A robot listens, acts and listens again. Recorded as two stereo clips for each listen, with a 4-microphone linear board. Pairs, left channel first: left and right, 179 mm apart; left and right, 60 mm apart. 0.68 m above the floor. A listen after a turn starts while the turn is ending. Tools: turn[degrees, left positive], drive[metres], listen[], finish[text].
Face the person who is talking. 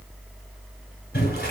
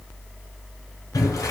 Action: listen[]
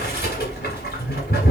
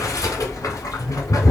Action: listen[]
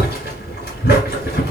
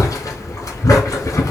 Action: finish[I can't make out anyone speaking, only boiling.]